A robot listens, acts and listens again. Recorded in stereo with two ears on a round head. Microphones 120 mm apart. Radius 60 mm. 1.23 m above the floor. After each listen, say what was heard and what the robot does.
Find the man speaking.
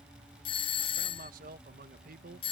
The man speaking: about 70° right or 110° right. Turn 70° right.
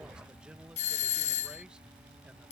Keep listening.
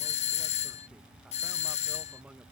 Facing the man speaking.